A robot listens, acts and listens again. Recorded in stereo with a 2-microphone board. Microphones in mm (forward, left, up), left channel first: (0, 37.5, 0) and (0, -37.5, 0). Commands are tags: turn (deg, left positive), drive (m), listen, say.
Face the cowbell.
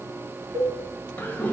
<turn deg="-90"/>
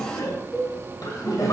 <say>Facing the cowbell, under 1 m away.</say>